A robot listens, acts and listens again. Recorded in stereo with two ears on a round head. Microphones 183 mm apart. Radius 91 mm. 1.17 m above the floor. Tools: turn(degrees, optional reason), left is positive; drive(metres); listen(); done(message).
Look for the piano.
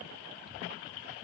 listen()
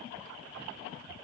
listen()
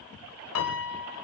turn(degrees=90)
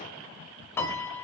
turn(degrees=10, reason="So it is at 10° left.")
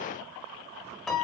done("Found it: a piano, straight ahead.")